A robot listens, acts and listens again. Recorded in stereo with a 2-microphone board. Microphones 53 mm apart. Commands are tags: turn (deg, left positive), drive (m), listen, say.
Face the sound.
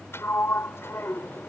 <turn deg="50"/>
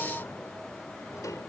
<turn deg="85"/>
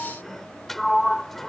<say>Facing the sliding door.</say>